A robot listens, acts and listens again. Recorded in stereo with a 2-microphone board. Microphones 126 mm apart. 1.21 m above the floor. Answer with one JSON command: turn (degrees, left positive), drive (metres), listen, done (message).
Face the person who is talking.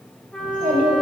{"turn": -75}
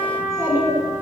{"turn": -20}
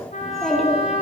{"done": "Found it: a child speaking, straight ahead."}